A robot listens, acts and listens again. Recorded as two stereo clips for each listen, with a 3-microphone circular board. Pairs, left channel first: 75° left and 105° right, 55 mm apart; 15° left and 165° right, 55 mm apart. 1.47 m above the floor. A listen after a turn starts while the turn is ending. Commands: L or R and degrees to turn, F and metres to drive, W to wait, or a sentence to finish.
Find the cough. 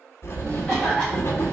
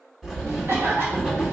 L150
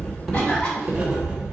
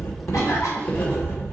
Found it: a cough, straight ahead, 2 to 4 m away.